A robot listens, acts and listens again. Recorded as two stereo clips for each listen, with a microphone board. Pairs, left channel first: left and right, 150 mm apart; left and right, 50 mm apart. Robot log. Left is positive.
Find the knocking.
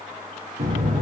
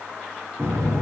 note: The knocking: about 65° right or 115° right.
cmd yaw -65
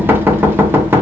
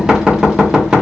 note: So it is at 15° right.
cmd yaw -15
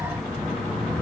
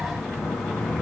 end: Facing the knocking, under 1 m away.